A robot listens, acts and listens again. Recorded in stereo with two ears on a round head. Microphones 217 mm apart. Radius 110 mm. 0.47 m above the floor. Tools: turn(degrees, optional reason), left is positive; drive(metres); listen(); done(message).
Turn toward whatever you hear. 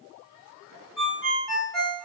turn(degrees=30)
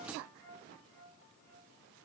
listen()
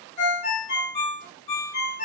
turn(degrees=150, reason="So it is at 150° left.")
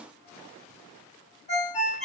turn(degrees=30, reason="The ringtone is now 30° left.")
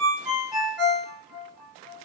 done("Facing the ringtone, 1 to 2 m away.")